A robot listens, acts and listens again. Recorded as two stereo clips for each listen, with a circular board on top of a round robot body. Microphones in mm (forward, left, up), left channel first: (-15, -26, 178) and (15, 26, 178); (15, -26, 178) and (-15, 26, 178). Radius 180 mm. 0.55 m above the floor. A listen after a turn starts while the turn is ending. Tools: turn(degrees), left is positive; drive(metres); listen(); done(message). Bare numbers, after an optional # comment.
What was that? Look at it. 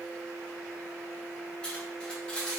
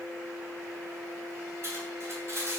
# The cutlery clinking: 165° left.
turn(165)
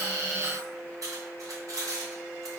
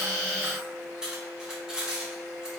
# The cutlery clinking is now 40° left.
turn(40)
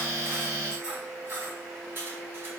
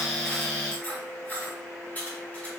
done("Facing the cutlery clinking, 1 to 2 m away.")